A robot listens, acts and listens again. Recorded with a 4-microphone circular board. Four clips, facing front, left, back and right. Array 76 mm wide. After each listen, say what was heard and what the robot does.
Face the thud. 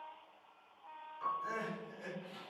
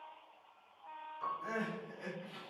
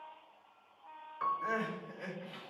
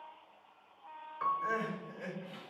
Keep listening.
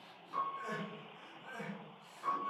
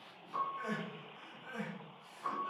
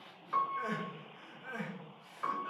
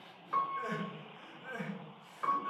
Keep listening.
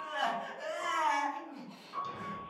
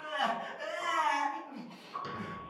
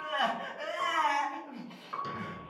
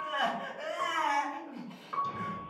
The thud: 135° left. Turn 135° left.
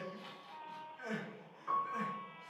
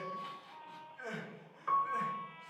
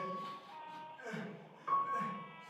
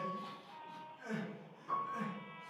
Facing where the thud came from. I can't hear it now.